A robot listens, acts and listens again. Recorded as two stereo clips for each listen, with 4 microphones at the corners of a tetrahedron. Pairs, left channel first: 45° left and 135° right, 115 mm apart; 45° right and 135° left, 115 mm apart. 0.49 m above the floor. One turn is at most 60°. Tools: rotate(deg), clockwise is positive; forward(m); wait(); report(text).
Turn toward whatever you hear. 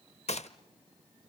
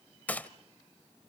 rotate(-30)
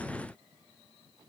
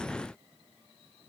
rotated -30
report("Facing where the gunshot came from. I can't hear it now.")